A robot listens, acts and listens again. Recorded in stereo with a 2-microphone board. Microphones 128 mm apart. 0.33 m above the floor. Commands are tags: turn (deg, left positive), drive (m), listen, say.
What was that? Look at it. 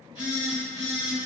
<turn deg="40"/>
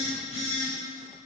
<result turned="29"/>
<turn deg="100"/>
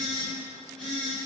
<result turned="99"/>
<say>Found it: a phone buzzing, straight ahead, 1 to 2 m away.</say>